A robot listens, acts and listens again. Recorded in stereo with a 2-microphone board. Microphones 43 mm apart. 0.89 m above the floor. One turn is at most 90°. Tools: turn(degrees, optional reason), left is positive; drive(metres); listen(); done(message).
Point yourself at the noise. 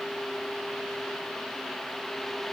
listen()
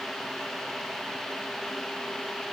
listen()
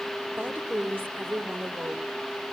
turn(degrees=-45, reason="The woman speaking: about 45° right or 135° right.")
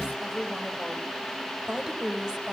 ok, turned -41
turn(degrees=-10, reason="So it is at 10° right.")
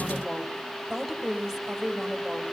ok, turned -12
done("Found it: a woman speaking, straight ahead.")